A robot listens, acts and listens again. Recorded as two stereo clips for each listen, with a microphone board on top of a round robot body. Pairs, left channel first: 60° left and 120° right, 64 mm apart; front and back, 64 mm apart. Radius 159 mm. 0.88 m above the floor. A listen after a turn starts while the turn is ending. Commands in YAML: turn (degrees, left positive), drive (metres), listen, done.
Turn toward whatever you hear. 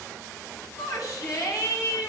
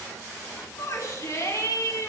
turn: 40
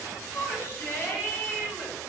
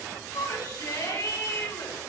turn: 10
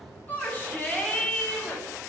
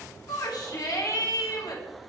done: "Found it: a shout, straight ahead, over 4 m away."